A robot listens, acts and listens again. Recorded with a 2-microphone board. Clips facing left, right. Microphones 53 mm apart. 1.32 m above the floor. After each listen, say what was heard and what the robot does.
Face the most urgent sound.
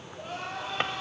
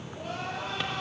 The crying: about 75° right or 105° right. Turn 75° right.
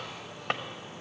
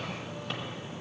Keep listening.
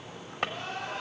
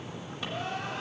Facing the crying, over 4 m away.